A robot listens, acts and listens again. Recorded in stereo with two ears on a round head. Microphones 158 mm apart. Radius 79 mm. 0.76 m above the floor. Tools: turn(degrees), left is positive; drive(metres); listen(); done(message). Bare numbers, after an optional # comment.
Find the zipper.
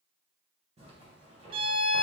# The zipper: about 35° right or 145° right.
turn(-35)
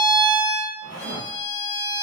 # So it is at 105° right.
turn(-105)
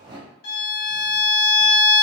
# The zipper is now 25° right.
turn(-25)
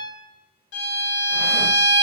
listen()
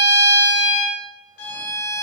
listen()
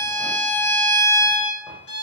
done("Facing where the zipper came from. I can't hear it now.")